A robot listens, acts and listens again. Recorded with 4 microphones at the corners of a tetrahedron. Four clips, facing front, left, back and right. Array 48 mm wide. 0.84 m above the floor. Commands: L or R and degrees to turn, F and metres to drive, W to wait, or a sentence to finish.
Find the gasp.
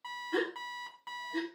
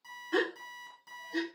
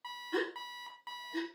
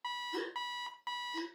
L85
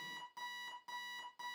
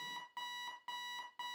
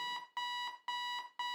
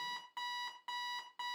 I heard a gasp from this way, but can't make it out now.